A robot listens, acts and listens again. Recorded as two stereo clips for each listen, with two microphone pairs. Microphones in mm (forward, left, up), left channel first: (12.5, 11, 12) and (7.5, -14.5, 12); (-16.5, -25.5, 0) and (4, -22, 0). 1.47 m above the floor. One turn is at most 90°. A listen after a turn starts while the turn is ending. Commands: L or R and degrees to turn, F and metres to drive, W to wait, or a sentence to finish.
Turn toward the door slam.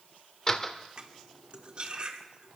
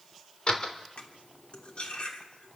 L90
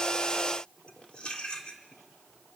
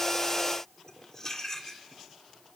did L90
L55
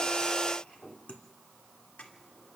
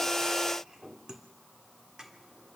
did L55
I heard a door slam from this way, but can't make it out now.